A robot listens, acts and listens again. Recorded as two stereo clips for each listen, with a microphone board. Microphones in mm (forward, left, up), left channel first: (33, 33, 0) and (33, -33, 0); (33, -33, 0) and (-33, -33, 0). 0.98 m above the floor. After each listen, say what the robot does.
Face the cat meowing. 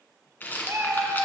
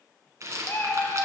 Turn 45° right.
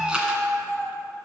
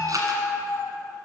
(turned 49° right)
Turn 15° right.
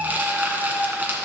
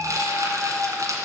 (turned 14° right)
Turn 15° right.
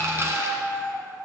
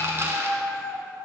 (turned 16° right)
Turn 10° right.
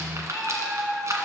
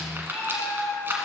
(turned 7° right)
Found it: a cat meowing, straight ahead.